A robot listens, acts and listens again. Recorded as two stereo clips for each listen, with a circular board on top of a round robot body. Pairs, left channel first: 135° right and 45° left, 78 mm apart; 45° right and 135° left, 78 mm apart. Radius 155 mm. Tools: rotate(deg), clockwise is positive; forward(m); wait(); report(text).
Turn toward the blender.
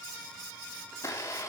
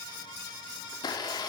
rotate(80)
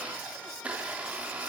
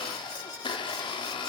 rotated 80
rotate(30)
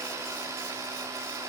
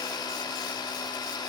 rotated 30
rotate(10)
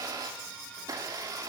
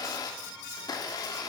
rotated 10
report("Found it: a blender, straight ahead, 1 to 2 m away.")